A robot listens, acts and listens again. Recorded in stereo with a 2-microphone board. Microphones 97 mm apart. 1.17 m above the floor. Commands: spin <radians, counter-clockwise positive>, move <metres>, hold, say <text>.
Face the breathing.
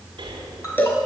spin -0.96
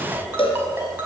say Facing the breathing.